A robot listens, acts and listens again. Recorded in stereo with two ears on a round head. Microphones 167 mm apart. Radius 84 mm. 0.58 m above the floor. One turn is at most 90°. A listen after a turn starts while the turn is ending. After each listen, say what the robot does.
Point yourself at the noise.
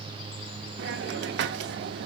Turn 65° right.
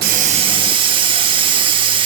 Turn 30° right.
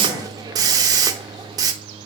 Turn 25° right.
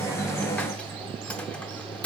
Facing the hiss.